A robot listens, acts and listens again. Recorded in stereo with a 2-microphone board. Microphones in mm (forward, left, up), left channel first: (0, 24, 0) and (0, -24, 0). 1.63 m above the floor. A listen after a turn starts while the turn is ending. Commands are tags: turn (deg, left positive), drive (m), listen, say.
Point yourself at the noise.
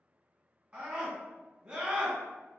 <turn deg="-30"/>
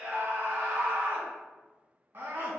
<turn deg="-120"/>
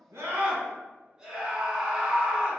<say>Facing the scream.</say>